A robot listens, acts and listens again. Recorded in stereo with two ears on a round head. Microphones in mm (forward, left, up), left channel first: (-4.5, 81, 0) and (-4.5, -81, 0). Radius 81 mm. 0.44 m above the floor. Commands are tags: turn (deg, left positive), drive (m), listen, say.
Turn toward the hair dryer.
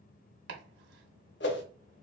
<listen/>
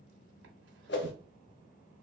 <listen/>
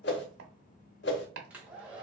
<turn deg="-30"/>
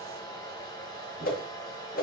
<turn deg="20"/>
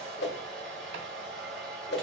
<say>Facing the hair dryer.</say>